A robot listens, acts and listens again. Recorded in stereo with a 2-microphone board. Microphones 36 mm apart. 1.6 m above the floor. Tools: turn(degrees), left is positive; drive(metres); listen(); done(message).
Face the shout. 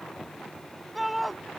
turn(degrees=-30)
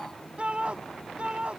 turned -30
turn(degrees=-150)
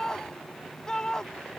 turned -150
turn(degrees=15)
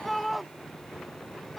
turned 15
done("Facing the shout.")